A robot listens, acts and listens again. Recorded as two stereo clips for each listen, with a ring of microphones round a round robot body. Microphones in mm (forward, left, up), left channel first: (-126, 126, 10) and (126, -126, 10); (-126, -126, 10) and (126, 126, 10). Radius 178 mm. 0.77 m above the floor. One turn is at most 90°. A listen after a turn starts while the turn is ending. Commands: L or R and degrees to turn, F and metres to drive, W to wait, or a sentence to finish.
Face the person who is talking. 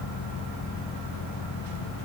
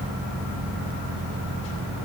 W
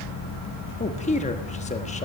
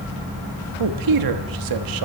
L65
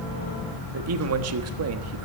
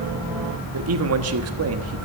Found it: a man speaking, straight ahead.